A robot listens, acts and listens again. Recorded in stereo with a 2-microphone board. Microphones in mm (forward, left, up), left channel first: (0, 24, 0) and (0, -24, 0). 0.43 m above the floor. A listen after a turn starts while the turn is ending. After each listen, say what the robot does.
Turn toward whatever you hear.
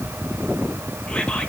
Turn 20° left.
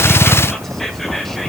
Found it: whispering, straight ahead, 1 to 2 m away.